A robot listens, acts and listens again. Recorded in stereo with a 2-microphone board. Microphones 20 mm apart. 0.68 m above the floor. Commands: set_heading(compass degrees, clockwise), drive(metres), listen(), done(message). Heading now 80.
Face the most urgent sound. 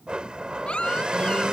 set_heading(20)
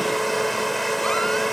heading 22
listen()
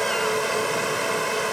listen()
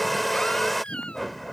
set_heading(317)
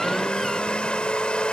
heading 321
listen()
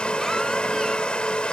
listen()
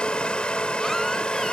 done("I heard a baby crying from this way, but can't make it out now.")